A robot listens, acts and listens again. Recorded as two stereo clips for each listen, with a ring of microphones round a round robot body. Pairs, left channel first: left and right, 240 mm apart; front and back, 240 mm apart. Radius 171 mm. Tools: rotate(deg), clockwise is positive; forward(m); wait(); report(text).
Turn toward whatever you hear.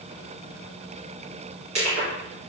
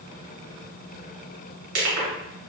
rotate(160)
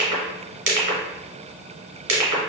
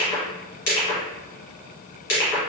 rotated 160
rotate(50)
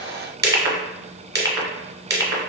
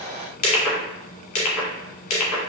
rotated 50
rotate(10)
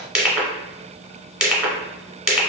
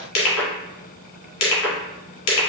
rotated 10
report("Found it: crushing, straight ahead, 1 to 2 m away.")